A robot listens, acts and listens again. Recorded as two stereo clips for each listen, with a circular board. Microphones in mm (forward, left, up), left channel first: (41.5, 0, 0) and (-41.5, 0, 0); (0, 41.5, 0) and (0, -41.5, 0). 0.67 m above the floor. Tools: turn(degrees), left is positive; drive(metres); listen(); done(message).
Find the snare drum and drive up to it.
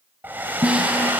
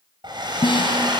turn(degrees=105)
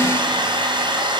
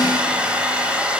listen()
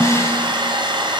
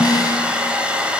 turn(degrees=55)
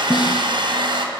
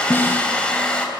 turn(degrees=25)
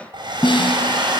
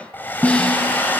turn(degrees=15)
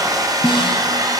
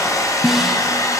drive(metres=1.0)
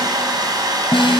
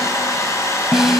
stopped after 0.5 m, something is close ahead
done("Blocked. The snare drum is further on, straight ahead.")